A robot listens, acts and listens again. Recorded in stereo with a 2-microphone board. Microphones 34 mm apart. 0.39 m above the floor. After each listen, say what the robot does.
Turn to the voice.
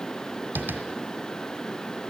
Keep listening.
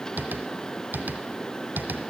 Keep listening.
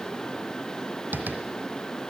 I can't make out anyone speaking, only tapping.